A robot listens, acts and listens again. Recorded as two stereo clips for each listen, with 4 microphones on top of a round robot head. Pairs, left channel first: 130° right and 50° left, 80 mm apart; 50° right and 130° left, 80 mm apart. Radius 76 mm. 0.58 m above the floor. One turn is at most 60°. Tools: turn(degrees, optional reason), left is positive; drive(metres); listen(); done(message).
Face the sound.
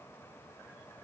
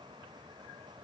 listen()
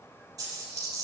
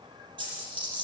turn(degrees=60, reason="The dropped coin: 100° left.")
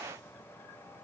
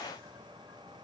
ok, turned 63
turn(degrees=40, reason="Nothing new. It was at 40° left.")
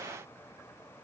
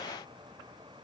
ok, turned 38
done("I heard a dropped coin from this way, but can't make it out now.")